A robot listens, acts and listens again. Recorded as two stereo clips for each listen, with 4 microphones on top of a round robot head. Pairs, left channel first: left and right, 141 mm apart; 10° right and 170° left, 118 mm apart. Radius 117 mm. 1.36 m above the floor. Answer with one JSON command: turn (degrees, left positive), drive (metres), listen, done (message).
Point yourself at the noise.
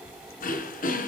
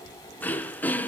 {"turn": 65}
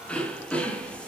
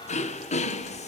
{"done": "Facing the throat clearing."}